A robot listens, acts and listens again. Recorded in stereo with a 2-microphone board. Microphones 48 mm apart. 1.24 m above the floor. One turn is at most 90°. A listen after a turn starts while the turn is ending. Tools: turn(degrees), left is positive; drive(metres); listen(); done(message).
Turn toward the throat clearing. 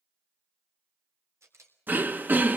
turn(degrees=-40)
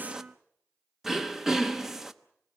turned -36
turn(degrees=-10)
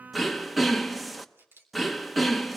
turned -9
done("Found it: throat clearing, straight ahead, under 1 m away.")